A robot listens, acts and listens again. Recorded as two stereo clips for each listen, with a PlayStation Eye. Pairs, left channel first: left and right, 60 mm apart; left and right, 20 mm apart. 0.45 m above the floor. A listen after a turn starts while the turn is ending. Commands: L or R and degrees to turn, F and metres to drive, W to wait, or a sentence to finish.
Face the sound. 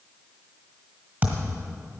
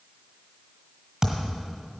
R30
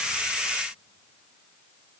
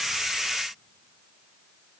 W
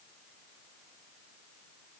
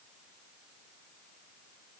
I heard a thud, but can't make it out now. It was about straight ahead or 120° right.